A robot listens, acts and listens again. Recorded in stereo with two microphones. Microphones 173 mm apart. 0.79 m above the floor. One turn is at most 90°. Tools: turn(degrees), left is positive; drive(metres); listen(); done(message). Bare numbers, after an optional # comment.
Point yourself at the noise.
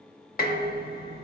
# The dishes clattering: about 55° left or 125° left.
turn(55)
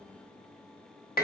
# So it is at 65° left.
turn(65)
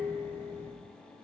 # The dishes clattering is now 15° left.
turn(15)
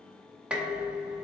done("Facing the dishes clattering, under 1 m away.")